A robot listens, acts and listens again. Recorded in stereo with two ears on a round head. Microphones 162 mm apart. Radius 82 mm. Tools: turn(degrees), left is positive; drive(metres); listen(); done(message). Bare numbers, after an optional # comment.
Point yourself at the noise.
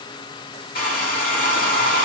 # The hair dryer: about 50° left or 130° left.
turn(50)
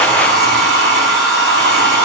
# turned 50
done("Found it: a hair dryer, straight ahead, 2 to 4 m away.")